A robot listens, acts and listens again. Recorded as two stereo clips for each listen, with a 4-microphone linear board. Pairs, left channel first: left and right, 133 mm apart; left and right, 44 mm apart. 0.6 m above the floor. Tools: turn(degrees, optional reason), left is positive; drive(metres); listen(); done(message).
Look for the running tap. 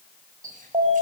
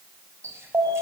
turn(degrees=-90)
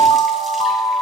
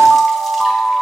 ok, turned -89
listen()
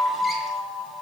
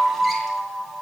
listen()
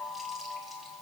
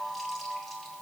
done("Facing where the running tap came from. I can't hear it now.")